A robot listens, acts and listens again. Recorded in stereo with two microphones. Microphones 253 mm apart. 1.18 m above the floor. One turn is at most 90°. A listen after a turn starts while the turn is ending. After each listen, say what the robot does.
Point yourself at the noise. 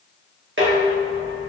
Turn 50° right.
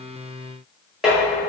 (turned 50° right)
Found it: dishes clattering, straight ahead, 1 to 2 m away.